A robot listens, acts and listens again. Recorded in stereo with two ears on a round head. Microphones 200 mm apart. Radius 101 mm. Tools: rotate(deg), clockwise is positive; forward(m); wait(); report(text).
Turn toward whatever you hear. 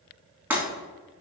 rotate(30)
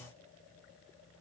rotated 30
wait()
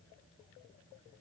report("I heard breaking glass, but can't make it out now. It was about 20° left or 140° right.")